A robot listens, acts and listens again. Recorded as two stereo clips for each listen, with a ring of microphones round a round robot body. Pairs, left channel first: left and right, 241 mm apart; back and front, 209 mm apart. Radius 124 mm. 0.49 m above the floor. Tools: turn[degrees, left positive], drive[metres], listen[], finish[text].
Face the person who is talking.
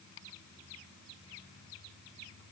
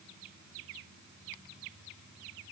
Action: listen[]
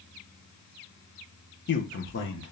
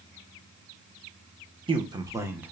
Thought: The man speaking: 80° left.
Action: turn[80]
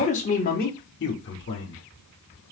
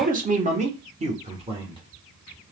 Thought: The man speaking is now 65° left.
Action: turn[65]
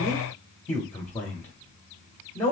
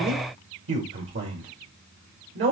Thought: The man speaking is now 10° left.
Action: turn[10]
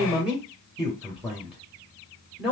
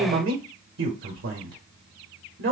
Action: finish[Facing the man speaking.]